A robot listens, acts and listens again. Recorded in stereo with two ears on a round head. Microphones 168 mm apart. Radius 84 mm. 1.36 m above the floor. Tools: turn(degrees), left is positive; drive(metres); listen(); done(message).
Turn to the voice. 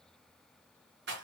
listen()
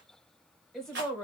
turn(degrees=30)
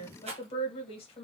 turn(degrees=145)
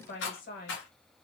turn(degrees=45)
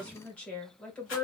done("Facing the woman speaking.")